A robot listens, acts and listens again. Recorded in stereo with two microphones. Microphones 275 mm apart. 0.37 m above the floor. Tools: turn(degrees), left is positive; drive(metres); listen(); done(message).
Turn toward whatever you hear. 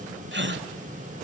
turn(degrees=-40)
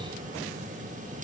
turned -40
listen()
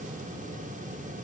done("I heard a gasp, but can't make it out now. It was about straight ahead or 100° right.")